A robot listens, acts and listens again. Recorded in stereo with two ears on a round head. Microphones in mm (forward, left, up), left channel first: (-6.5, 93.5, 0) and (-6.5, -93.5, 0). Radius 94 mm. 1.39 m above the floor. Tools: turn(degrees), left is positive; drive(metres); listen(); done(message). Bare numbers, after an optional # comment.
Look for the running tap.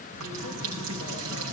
# The running tap: about 75° right or 105° right.
turn(-75)
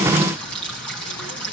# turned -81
done("Found it: a running tap, straight ahead.")